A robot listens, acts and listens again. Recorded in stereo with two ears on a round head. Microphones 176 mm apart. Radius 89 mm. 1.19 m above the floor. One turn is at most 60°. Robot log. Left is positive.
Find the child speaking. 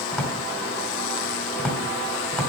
cmd idle
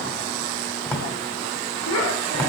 cmd yaw +60
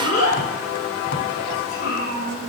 note: So it is at 45° left.
cmd yaw +45
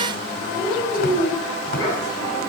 note: The child speaking is now 20° left.
cmd yaw +20
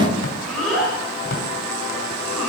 end: Found it: a child speaking, straight ahead, over 4 m away.